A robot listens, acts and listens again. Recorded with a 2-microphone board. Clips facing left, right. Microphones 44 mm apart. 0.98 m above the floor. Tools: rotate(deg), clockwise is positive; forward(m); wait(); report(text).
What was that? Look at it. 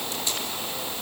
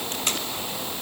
rotate(60)
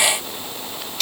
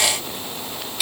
report("Found it: tape being pulled, straight ahead.")